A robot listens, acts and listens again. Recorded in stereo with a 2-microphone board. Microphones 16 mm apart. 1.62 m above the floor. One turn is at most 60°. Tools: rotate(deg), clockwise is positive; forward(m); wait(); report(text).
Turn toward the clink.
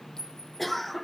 rotate(-50)
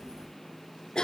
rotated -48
wait()
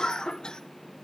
wait()
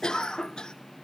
report("I heard a clink, but can't make it out now. It was about straight ahead or 80° left.")